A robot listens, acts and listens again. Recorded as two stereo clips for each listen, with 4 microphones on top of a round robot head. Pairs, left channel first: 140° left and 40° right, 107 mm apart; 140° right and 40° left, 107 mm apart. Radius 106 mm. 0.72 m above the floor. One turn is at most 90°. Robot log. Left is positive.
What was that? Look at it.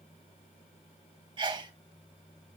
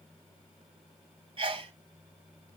end: Facing the sneeze, 1 to 2 m away.